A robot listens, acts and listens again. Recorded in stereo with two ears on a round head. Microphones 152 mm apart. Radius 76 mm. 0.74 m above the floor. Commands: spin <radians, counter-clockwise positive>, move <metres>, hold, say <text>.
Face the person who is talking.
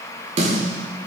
hold
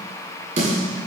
hold
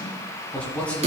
spin 0.52
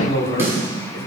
spin 2.44
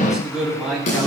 say Found it: a man speaking, straight ahead.